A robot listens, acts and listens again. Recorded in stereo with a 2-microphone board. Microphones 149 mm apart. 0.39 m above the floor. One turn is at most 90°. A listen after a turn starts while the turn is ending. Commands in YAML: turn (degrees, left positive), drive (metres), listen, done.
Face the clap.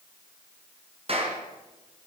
turn: -40
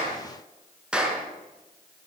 done: "Found it: a clap, straight ahead, over 4 m away."